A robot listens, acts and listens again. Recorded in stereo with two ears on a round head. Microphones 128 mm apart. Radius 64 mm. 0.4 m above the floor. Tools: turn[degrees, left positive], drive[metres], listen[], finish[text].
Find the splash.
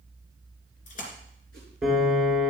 Thought: The splash: about 60° left or 120° left.
Action: turn[60]
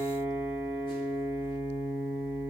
Action: listen[]
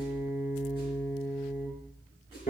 Action: finish[I heard a splash, but can't make it out now. It was about straight ahead or 60° left.]